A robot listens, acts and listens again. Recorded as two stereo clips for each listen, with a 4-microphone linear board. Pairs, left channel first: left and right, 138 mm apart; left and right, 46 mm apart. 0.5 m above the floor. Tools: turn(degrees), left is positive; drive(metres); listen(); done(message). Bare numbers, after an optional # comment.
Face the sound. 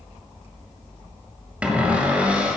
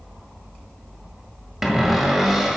turn(-30)
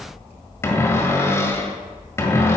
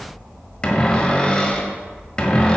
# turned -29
# So it is at 20° left.
turn(20)
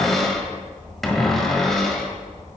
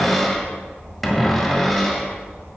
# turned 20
done("Found it: a cupboard door, straight ahead.")